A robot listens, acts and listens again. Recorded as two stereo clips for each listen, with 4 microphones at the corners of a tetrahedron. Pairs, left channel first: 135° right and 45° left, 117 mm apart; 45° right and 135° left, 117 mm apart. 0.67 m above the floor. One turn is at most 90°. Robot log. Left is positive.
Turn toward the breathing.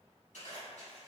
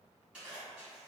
cmd idle
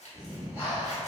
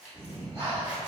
note: The breathing: 160° left.
cmd yaw +90
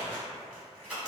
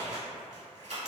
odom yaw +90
note: Nothing new. It was at 70° left.
cmd yaw +70
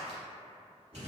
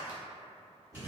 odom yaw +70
end: Found it: breathing, straight ahead, 1 to 2 m away.